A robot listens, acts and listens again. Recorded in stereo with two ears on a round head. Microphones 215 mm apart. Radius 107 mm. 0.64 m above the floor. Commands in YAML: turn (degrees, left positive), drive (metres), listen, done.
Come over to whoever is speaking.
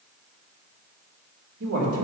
turn: -55
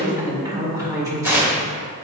turn: -15
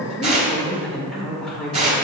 drive: 1.0
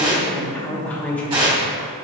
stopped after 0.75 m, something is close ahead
turn: 10
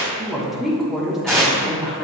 done: "I am next to the woman speaking."